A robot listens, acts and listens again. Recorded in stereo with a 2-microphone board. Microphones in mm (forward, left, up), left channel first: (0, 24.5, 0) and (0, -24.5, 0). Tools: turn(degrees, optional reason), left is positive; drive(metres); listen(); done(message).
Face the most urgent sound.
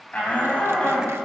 turn(degrees=25, reason="The shout: about 25° left or 155° left.")
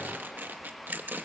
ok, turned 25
listen()
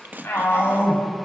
turn(degrees=130, reason="So it is at 130° left.")
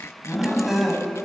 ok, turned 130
done("Facing the shout, over 4 m away.")